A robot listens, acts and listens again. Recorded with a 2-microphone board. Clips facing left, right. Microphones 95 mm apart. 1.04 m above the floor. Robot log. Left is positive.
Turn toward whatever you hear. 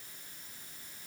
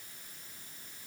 cmd idle
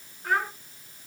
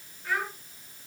note: The child speaking: about 60° left or 120° left.
cmd yaw +60
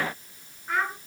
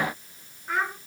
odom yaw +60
end: Found it: a child speaking, straight ahead, over 4 m away.